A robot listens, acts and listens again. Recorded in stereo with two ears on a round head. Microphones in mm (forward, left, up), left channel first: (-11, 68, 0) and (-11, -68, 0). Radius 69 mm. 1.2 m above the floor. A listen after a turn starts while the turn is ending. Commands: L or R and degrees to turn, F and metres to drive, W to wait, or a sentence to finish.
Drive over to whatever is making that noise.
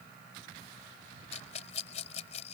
L45
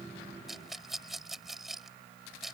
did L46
F1.0
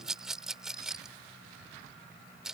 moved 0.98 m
F1.0
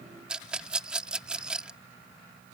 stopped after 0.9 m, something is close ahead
I am next to the rattle.